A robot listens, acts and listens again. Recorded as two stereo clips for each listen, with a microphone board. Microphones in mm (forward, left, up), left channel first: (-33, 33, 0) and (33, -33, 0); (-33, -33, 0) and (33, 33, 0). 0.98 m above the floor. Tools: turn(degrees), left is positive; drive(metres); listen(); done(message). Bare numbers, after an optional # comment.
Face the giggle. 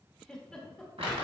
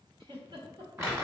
# The giggle: 55° left.
turn(55)
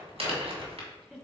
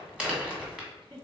# The giggle is now 35° left.
turn(35)
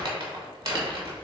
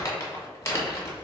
listen()
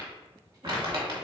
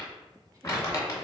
listen()
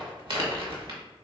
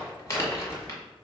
done("I heard a giggle from this way, but can't make it out now.")